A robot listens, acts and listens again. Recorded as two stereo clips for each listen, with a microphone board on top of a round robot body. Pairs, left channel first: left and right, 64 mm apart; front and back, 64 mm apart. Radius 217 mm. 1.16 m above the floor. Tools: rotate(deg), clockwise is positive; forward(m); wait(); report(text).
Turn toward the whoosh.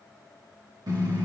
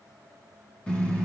wait()
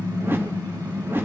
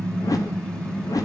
rotate(35)
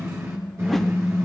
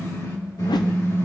wait()
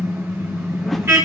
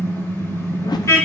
report("Found it: a whoosh, straight ahead.")